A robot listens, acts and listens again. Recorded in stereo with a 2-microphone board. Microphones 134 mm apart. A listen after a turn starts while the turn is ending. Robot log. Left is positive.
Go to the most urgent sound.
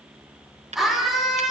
cmd yaw +30
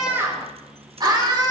note: So it is at 35° right.
cmd yaw -35
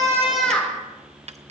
note: The scream is now 10° left.
cmd yaw +10
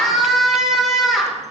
cmd fwd 1.0
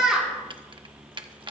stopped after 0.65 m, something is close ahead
end: Something is in my way. I am facing the scream but have not reached it.